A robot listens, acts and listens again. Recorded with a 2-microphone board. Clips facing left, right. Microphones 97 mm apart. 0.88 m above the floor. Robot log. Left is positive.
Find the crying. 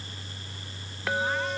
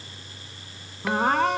note: The crying: about 65° right or 115° right.
cmd yaw -65
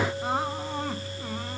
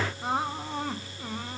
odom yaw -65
end: Facing the crying.